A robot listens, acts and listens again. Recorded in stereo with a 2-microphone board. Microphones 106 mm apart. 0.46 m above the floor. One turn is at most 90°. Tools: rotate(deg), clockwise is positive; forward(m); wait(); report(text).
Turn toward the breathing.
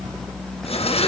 wait()
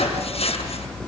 wait()
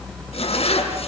report("I can't make out breathing, only a zipper.")